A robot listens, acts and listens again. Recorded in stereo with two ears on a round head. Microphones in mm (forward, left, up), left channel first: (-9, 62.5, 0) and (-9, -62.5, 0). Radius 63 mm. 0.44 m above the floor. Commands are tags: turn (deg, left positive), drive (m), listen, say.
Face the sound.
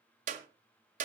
<turn deg="-60"/>
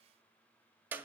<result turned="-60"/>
<turn deg="-15"/>
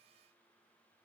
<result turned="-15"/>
<listen/>
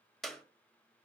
<say>Found it: a clap, straight ahead, 1 to 2 m away.</say>